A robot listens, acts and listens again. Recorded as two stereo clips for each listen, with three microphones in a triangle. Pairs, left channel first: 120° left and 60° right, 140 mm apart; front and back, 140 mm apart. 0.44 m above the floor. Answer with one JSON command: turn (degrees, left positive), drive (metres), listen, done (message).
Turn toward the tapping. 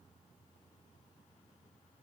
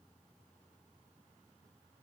{"listen": true}
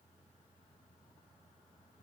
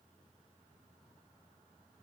{"listen": true}
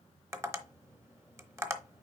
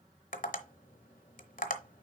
{"turn": 10}
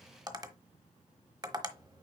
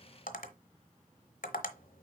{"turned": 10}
{"done": "Found it: tapping, straight ahead, 1 to 2 m away."}